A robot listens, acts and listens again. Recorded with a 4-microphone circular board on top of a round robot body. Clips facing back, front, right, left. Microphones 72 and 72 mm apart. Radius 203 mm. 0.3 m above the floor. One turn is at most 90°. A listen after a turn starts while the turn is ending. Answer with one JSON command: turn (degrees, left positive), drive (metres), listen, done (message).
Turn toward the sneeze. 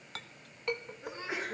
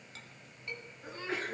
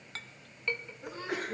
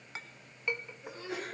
{"turn": -90}
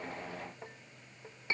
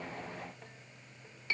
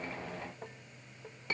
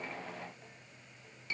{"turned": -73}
{"turn": -30}
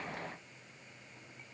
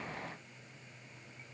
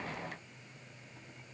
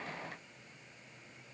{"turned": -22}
{"turn": -10}
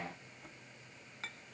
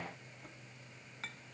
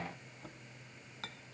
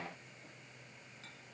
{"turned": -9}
{"done": "Facing where the sneeze came from. I can't hear it now."}